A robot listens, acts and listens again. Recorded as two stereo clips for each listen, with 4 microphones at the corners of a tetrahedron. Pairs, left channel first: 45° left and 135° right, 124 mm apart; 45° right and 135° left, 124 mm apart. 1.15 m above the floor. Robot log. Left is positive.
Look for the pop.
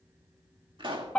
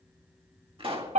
note: The pop: straight behind.
cmd yaw +180
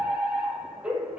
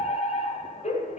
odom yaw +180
end: Facing where the pop came from. I can't hear it now.